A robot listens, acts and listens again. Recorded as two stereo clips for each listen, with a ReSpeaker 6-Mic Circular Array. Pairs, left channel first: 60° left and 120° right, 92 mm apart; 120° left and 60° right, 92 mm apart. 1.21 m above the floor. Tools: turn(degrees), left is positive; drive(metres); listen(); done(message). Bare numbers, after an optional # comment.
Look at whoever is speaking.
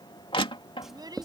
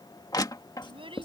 # The child speaking: 80° right.
turn(-80)
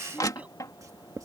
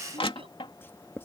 listen()
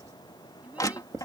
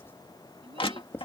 listen()
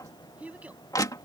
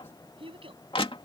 # The child speaking is now 45° right.
turn(-45)
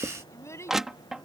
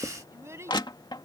done("Facing the child speaking.")